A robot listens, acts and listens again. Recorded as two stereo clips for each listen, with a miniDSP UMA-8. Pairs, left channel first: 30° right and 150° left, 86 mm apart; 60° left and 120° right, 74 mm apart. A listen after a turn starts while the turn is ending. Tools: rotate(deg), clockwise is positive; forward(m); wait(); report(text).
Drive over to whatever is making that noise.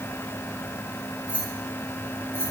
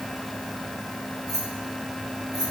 rotate(90)
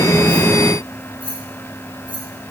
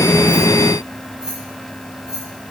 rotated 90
rotate(40)
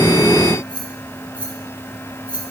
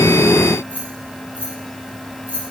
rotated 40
forward(1.0)
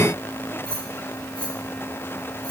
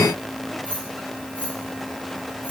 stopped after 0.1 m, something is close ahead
report("Something is in my way. I am facing the keys jangling but have not reached it.")